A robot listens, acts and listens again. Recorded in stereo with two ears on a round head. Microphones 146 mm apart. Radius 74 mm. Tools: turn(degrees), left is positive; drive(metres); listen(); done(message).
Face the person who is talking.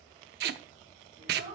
turn(degrees=-50)
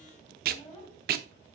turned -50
turn(degrees=10)
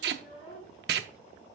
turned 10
done("Found it: a child speaking, straight ahead, over 4 m away.")